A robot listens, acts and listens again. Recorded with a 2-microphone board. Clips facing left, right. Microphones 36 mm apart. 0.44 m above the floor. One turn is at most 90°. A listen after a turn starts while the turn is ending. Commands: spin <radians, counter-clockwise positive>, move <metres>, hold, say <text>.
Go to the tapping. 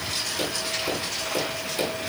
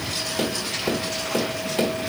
spin -0.87
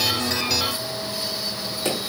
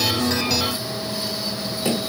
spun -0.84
move 1.0
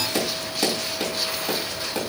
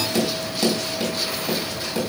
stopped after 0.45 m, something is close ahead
say Something is in my way. I am facing the tapping but have not reached it.